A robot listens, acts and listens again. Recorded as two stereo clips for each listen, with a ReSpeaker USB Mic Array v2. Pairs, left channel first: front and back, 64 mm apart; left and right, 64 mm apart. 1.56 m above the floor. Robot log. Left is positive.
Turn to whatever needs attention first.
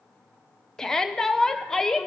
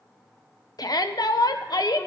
note: The shout: 85° left.
cmd yaw +85
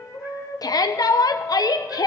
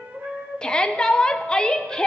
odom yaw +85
note: The shout is now 10° left.
cmd yaw +10
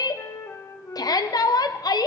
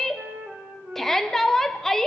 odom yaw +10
end: Found it: a shout, straight ahead.